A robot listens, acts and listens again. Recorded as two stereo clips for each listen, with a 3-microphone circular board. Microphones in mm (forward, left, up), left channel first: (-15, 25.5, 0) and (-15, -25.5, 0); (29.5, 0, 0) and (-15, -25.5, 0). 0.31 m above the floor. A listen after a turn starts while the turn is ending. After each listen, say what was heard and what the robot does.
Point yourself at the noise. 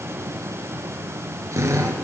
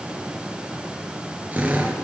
The drill: 95° right. Turn 95° right.
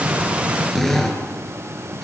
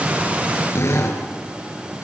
Facing the drill, over 4 m away.